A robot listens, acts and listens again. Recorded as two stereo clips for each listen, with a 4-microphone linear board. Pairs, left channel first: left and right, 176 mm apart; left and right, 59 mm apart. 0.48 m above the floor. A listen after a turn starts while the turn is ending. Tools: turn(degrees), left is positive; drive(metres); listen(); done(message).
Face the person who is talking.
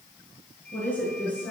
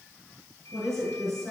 turn(degrees=30)
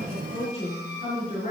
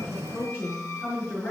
turn(degrees=145)
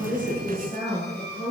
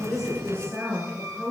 turn(degrees=-35)
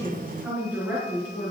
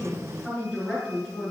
turn(degrees=-10)
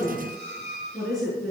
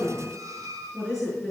done("Facing the woman speaking, over 4 m away.")